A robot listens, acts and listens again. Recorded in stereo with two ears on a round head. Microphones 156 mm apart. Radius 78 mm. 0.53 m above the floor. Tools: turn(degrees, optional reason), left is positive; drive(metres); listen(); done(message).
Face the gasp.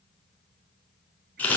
listen()
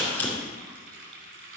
listen()
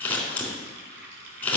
done("I can't make out a gasp to turn to.")